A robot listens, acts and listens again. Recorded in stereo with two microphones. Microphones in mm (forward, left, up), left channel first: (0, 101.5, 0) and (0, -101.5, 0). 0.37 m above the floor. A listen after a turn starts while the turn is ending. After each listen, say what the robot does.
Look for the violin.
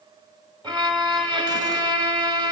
Turn 25° right.
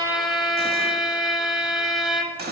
Facing the violin, under 1 m away.